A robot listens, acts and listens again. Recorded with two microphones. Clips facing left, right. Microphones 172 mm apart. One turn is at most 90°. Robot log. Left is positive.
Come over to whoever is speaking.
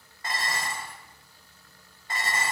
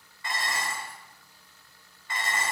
cmd idle
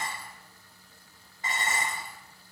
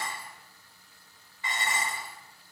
cmd idle
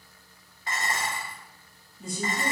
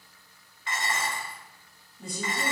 note: The woman speaking: about 60° right or 120° right.
cmd yaw -60
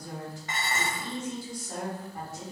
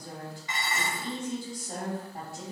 note: So it is at 35° right.
cmd yaw -35
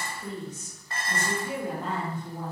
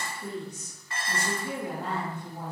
note: The woman speaking is now 15° right.
cmd yaw -15
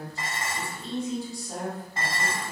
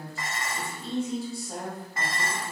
cmd fwd 1.0
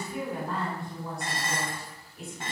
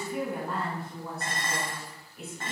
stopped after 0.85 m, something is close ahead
end: I am next to the woman speaking.